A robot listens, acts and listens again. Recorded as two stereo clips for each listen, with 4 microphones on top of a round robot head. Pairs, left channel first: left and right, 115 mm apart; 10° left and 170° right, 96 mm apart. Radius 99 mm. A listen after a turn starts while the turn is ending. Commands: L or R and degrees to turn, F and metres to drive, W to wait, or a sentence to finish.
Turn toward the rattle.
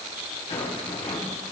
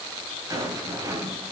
L135
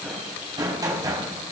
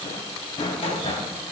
R30
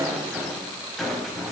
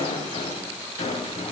Facing the rattle.